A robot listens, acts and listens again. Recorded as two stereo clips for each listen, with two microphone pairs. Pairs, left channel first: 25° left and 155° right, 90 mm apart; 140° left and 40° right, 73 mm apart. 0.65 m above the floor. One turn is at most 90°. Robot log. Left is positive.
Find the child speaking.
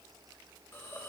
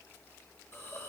cmd idle
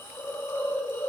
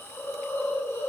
cmd idle
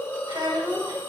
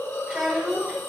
note: The child speaking: 130° right.
cmd yaw -90
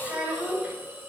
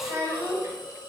note: The child speaking is now 85° right.
cmd yaw -85
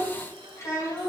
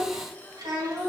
note: The child speaking is now 35° right.
cmd yaw -35
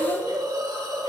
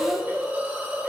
cmd idle
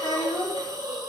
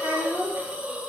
note: The child speaking is now 15° left.
cmd yaw +15
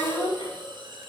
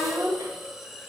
end: Facing the child speaking.